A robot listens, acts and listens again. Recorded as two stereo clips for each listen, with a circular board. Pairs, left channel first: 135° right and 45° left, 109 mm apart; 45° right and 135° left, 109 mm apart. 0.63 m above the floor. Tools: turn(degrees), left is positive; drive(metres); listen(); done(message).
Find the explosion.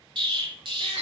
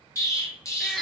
turn(degrees=10)
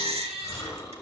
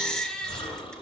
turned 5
done("I heard an explosion from this way, but can't make it out now.")